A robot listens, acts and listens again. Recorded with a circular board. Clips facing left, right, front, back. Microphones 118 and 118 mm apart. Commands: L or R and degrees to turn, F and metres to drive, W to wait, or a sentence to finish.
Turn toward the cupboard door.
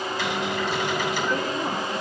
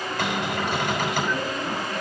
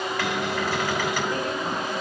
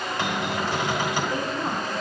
R120
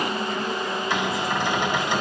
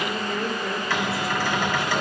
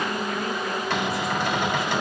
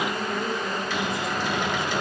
L20
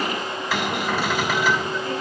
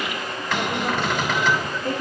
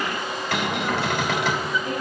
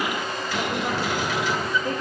Facing the cupboard door.